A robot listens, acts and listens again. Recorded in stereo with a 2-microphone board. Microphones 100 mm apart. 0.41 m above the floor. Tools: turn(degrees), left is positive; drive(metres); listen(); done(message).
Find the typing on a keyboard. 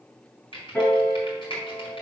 turn(degrees=55)
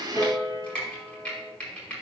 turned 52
turn(degrees=10)
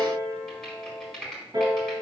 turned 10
done("Facing the typing on a keyboard, over 4 m away.")